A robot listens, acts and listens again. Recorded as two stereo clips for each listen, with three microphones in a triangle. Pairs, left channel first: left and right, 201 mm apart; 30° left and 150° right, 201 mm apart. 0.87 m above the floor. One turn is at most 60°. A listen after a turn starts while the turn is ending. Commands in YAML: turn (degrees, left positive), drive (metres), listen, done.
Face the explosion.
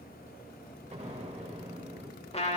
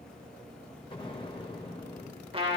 turn: -35
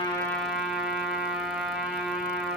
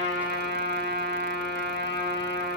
done: "Facing where the explosion came from. I can't hear it now."